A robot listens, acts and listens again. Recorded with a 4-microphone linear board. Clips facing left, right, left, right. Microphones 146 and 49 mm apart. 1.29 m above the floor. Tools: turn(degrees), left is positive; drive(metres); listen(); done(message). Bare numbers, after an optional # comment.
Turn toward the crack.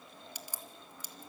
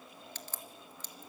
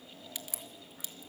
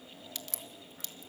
turn(30)
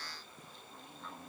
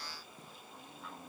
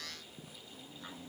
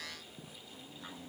listen()
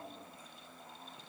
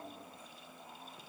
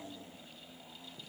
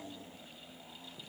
done("I heard a crack, but can't make it out now. It was about 15° right or 135° left.")